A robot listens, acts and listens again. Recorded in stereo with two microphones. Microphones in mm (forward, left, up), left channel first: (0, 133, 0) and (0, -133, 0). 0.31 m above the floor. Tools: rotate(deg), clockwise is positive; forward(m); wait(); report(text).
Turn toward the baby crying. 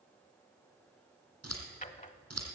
wait()
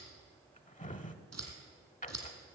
wait()
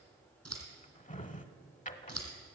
report("I can't make out a baby crying to turn to.")